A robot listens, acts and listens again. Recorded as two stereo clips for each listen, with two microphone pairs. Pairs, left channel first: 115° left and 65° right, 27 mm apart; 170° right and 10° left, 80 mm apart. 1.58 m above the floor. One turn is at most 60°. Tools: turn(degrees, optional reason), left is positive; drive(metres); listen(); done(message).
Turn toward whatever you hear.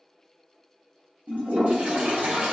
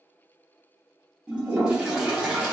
turn(degrees=-60, reason="The toilet flushing: 65° right.")
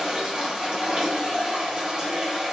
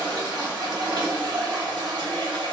done("Found it: a toilet flushing, straight ahead.")